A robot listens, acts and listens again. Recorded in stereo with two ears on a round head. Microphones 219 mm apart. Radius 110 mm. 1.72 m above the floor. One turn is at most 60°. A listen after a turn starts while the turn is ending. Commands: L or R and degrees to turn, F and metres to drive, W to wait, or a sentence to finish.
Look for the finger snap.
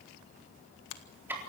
L60
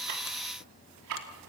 W
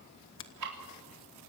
L50
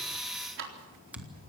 Facing the finger snap, 1 to 2 m away.